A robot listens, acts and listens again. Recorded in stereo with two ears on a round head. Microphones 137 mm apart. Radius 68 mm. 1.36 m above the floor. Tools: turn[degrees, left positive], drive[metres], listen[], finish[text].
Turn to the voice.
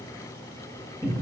Action: listen[]
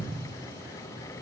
Action: listen[]
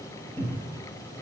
Action: finish[I can't make out anyone speaking to turn to.]